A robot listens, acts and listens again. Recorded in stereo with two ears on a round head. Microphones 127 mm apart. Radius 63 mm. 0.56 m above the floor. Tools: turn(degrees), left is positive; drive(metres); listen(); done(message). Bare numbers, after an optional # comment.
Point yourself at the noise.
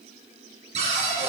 # The cupboard door: about 50° right or 130° right.
turn(-50)
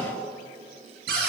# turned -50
# So it is at 85° right.
turn(-85)
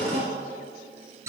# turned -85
# The cupboard door is now 20° right.
turn(-20)
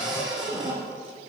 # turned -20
done("Facing the cupboard door.")